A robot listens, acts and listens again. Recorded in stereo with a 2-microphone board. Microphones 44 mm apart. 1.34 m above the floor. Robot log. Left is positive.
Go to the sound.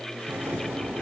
cmd yaw -90
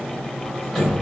cmd fwd 1.0
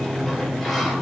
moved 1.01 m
cmd fwd 1.0
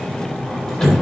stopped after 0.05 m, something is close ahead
note: The sliding door is now 10° left.
cmd yaw +10
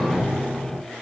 end: Blocked. The sliding door is further on, straight ahead.